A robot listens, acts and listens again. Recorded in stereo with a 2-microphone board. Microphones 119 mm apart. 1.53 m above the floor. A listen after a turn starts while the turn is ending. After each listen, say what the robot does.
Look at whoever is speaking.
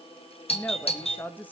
Turn 30° left.
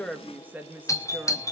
Turn 15° right.
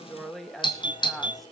Found it: a woman speaking, straight ahead.